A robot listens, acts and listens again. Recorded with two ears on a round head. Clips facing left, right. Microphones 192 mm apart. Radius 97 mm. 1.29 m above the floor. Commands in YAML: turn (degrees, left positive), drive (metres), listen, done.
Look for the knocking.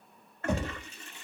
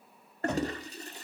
turn: 30
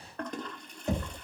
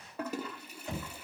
turn: 140
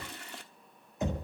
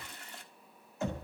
turn: 15
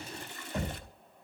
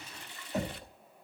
done: "Facing the knocking."